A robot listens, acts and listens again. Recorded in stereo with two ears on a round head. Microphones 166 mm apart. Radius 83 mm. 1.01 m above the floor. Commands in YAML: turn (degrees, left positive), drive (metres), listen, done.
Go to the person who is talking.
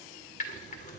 listen: true
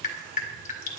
listen: true
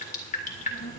turn: 35
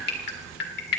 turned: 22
turn: 15
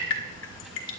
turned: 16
drive: 1.0
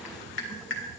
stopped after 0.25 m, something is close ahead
done: "Blocked. The child speaking is further on, straight ahead."